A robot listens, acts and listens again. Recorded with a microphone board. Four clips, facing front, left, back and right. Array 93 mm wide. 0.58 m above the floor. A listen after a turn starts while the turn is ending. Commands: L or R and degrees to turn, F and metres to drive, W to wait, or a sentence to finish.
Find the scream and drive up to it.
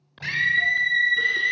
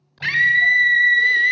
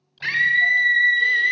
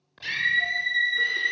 L115
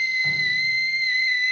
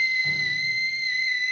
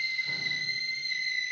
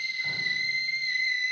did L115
F1.0
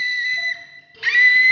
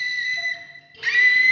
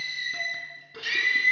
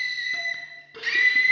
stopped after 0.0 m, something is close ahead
L10
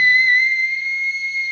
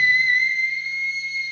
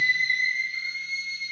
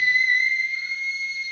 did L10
Blocked. The scream is further on, straight ahead.